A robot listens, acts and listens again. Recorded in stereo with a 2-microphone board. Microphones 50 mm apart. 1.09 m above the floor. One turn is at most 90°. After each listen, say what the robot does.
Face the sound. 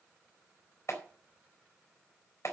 Turn 65° left.
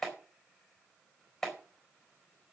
Facing the clap, over 4 m away.